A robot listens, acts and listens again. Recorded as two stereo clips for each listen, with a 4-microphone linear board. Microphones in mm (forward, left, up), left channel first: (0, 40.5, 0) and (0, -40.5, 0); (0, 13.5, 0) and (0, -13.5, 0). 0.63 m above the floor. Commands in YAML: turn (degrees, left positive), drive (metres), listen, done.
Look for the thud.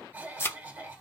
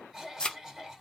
turn: 30
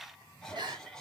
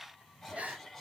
listen: true
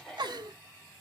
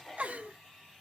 done: "I heard a thud, but can't make it out now. It was about straight ahead or 120° left."